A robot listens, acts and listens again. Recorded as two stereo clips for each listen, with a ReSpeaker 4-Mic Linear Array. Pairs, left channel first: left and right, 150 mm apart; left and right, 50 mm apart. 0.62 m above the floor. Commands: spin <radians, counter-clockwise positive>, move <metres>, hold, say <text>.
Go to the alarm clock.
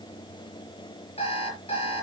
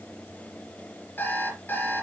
spin 0.79
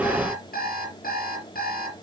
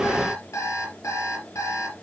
spin 1.57
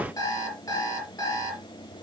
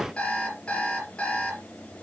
spin 0.35
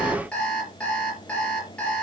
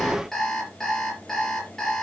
move 1.0
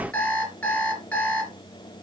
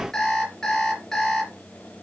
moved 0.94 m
spin 0.17
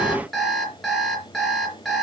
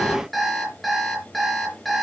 move 1.0
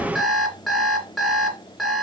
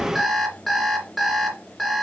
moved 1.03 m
move 1.0
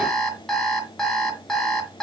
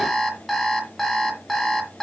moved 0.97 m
move 1.0
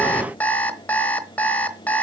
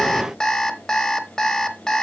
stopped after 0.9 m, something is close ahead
spin 0.17
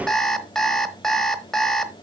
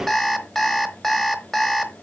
say I am next to the alarm clock.